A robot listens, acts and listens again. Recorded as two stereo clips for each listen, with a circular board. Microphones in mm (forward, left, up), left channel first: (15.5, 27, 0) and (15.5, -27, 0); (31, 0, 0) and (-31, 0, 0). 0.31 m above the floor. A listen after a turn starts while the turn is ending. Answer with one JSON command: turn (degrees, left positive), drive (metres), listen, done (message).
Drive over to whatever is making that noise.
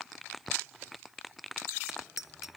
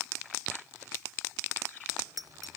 {"turn": -170}
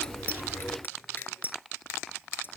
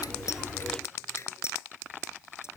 {"turn": 40}
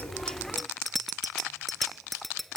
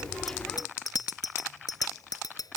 {"drive": 1.0}
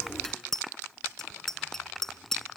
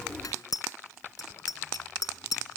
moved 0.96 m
{"turn": 10}
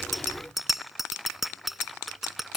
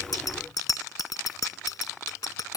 {"drive": 1.0}
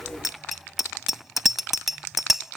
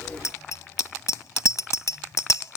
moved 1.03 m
{"drive": 1.0}
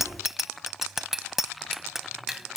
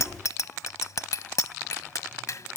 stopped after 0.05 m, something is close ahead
{"done": "Arrived at the bicycle bell, straight ahead."}